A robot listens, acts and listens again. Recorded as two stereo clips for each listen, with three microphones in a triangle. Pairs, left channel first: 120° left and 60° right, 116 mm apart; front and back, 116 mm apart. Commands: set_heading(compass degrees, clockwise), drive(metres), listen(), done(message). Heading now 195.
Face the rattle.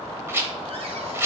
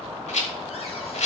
set_heading(185)
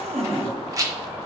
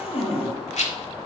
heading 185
done("Facing the rattle.")